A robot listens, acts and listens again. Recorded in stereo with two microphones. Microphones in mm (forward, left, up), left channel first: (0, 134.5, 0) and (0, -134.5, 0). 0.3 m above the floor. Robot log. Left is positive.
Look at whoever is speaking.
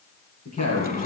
cmd yaw +90
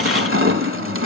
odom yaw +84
cmd idle
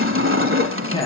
note: The woman speaking is now 15° left.
cmd yaw +15
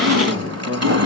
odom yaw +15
end: Found it: a woman speaking, straight ahead, over 4 m away.